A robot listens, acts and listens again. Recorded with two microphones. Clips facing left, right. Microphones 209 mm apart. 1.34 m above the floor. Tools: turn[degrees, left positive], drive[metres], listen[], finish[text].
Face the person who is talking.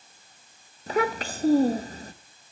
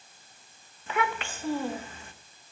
Thought: The child speaking: about 40° left or 140° left.
Action: turn[40]
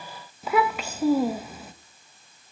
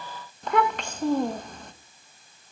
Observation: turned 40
Action: finish[Found it: a child speaking, straight ahead.]